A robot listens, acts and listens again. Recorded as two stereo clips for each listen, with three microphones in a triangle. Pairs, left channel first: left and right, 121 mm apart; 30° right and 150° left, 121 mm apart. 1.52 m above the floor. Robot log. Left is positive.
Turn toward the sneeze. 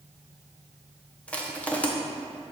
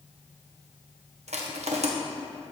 cmd idle
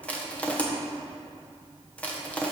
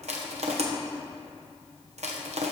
cmd idle
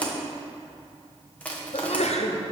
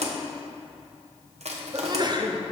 note: The sneeze: 100° left.
cmd yaw +100
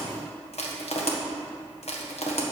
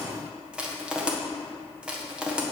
end: Facing where the sneeze came from. I can't hear it now.